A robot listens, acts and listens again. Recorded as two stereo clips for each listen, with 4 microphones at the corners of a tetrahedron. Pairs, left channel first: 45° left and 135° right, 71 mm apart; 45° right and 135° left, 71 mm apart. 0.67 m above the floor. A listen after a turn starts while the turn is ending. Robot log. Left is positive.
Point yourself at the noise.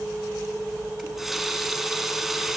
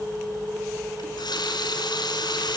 note: The running tap: 50° right.
cmd yaw -50
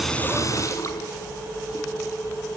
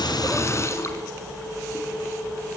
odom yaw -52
cmd idle
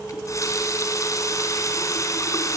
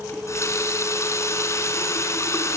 end: Found it: a running tap, straight ahead.